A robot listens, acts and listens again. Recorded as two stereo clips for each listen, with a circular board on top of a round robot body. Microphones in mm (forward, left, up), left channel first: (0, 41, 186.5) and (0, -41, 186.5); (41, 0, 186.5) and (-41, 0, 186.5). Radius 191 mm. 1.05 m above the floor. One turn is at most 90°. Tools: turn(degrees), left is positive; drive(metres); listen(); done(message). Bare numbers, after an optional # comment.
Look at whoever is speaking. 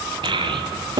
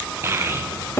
# The child speaking: 115° right.
turn(-90)
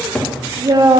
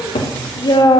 # The child speaking is now 40° right.
turn(-40)
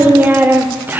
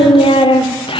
# The child speaking is now 20° right.
turn(-20)
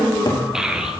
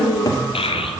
done("Found it: a child speaking, straight ahead.")